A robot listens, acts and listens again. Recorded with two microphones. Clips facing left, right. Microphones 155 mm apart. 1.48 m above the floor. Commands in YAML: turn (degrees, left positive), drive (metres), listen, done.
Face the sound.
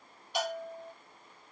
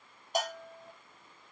turn: -45
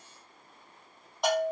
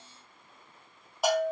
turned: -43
done: "Facing the bell."